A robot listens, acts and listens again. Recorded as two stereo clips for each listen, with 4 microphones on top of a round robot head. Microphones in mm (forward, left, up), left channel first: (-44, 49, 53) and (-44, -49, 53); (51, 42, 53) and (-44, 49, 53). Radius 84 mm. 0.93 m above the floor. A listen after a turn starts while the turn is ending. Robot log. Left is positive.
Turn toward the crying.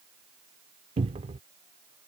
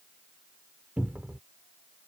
cmd idle
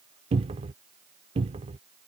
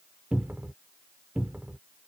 cmd idle
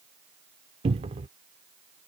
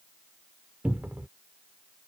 end: I can't make out crying to turn to.